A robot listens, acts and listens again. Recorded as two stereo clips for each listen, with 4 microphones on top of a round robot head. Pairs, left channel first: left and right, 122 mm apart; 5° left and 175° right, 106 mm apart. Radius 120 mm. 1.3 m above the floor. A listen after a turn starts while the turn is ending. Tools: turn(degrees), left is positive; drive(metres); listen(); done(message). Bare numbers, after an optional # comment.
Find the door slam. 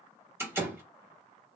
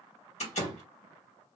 # The door slam: 20° right.
turn(-20)
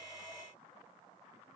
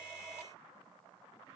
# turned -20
done("I heard a door slam from this way, but can't make it out now.")